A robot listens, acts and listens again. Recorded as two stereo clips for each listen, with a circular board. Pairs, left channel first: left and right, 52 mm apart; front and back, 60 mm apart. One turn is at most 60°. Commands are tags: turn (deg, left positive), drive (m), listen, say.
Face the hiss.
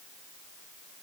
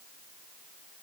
<listen/>
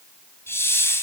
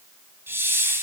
<turn deg="60"/>
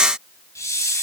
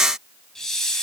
<turn deg="60"/>
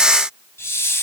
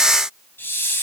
<turn deg="55"/>
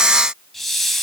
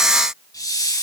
<say>Found it: a hiss, straight ahead.</say>